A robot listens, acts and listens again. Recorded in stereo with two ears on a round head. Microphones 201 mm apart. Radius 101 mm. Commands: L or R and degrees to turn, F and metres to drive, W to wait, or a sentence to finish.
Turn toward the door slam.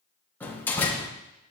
L30
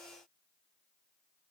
W
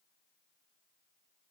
I heard a door slam, but can't make it out now. It was about 20° right or 140° left.